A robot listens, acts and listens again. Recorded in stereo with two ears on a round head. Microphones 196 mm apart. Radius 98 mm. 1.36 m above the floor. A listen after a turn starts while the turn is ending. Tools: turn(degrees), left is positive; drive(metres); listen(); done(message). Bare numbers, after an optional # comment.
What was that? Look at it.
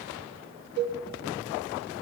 # The cowbell: about 55° right or 125° right.
turn(-55)
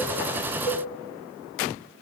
done("Facing the cowbell, over 4 m away.")